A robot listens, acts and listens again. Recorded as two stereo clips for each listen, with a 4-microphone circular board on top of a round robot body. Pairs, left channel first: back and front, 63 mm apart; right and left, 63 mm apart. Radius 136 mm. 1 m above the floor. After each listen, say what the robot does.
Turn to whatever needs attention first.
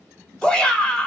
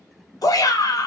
Turn 105° right.
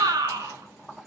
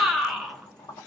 Facing the shout.